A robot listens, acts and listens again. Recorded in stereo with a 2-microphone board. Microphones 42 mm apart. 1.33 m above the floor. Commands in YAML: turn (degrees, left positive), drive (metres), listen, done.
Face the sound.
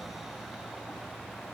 listen: true
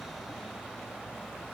listen: true
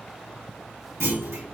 turn: -90
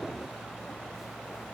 done: "Facing where the clunk came from. I can't hear it now."